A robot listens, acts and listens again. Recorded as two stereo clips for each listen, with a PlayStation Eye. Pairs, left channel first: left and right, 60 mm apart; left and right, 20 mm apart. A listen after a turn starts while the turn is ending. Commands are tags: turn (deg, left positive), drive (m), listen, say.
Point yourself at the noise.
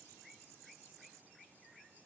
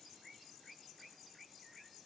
<listen/>
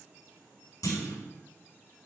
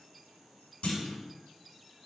<turn deg="90"/>
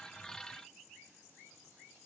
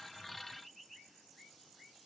<say>Facing where the clunk came from. I can't hear it now.</say>